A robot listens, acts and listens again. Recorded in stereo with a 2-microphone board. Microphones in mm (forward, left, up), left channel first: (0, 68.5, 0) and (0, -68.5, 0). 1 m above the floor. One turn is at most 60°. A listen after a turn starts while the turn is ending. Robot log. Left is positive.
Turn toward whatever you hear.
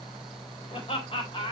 note: The laughter: about 40° left or 140° left.
cmd yaw +40
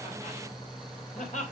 note: So it is at 115° left.
cmd yaw +60
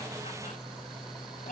note: Nothing new. It was at 55° left.
cmd yaw +55
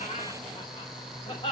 note: The laughter is now 40° left.
cmd yaw +40
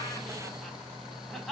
end: Found it: laughter, straight ahead.